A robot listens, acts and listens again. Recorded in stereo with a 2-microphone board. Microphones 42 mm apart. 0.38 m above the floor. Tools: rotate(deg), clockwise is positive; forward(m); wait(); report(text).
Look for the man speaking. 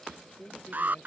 rotate(-40)
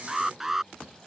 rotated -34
wait()
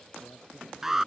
wait()
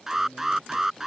rotate(-105)
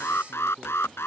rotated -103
report("Facing the man speaking.")